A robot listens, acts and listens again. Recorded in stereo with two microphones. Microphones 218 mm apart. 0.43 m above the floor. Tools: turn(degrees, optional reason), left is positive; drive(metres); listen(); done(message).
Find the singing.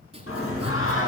turn(degrees=70, reason="The singing: about 70° left or 110° left.")
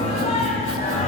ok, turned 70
turn(degrees=30, reason="So it is at 30° left.")
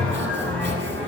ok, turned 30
done("Facing the singing.")